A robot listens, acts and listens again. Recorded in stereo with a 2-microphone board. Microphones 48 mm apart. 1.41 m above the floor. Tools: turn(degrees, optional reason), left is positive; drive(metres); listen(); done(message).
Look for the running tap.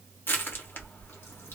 listen()
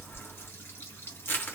turn(degrees=55, reason="The running tap: about 55° left or 125° left.")
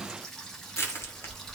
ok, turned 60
turn(degrees=10, reason="So it is at 10° left.")
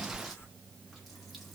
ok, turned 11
listen()
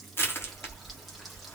listen()
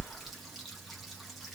done("Found it: a running tap, straight ahead.")